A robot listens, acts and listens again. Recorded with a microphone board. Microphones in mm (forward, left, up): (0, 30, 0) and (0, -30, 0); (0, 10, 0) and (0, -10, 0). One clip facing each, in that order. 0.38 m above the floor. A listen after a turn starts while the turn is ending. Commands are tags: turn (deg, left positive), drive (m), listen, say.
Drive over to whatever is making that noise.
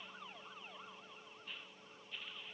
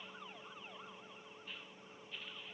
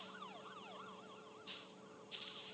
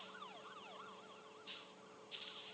<listen/>
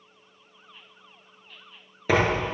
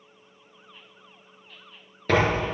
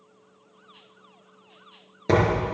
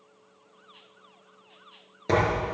<turn deg="30"/>
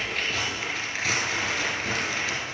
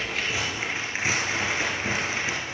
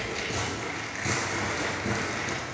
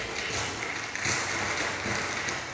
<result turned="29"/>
<turn deg="-25"/>
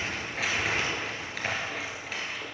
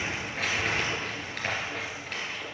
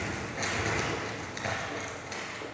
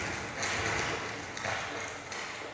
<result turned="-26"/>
<drive m="1.0"/>
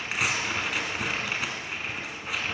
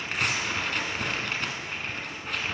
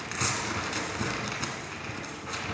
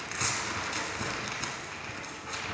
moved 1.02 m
<drive m="1.0"/>
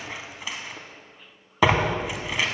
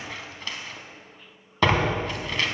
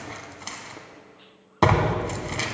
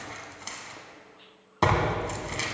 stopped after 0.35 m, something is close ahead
<turn deg="10"/>
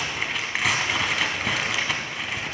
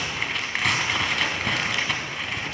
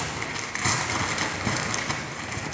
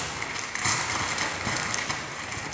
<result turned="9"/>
<say>I am next to the tearing paper.</say>